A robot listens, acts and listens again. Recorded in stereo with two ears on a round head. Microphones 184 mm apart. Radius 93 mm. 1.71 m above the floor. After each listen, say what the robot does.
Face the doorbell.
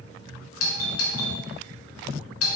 Turn 75° left.
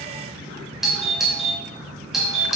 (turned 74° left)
Found it: a doorbell, straight ahead.